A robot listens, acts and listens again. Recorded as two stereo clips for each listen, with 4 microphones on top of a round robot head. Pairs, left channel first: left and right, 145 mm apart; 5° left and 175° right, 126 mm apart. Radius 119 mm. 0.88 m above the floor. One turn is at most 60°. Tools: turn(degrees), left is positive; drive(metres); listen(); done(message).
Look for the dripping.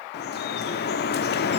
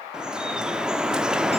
turn(degrees=60)
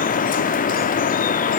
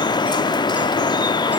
turn(degrees=60)
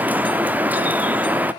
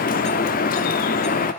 turn(degrees=-10)
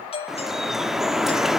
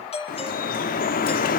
done("Facing the dripping, under 1 m away.")